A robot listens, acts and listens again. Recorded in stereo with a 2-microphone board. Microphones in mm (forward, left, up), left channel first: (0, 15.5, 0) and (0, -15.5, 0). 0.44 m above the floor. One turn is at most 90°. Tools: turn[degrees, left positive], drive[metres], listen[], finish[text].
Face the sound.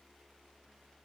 Action: listen[]
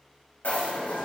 Thought: The rattle: about 70° left or 110° left.
Action: turn[70]
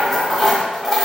Action: finish[Found it: a rattle, straight ahead, under 1 m away.]